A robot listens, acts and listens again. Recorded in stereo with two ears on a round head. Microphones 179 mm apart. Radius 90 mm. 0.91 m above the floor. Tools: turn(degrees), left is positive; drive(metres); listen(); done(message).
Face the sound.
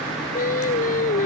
turn(degrees=40)
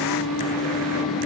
turn(degrees=95)
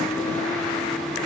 listen()
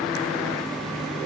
listen()
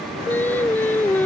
turn(degrees=10)
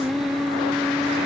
done("Facing the singing.")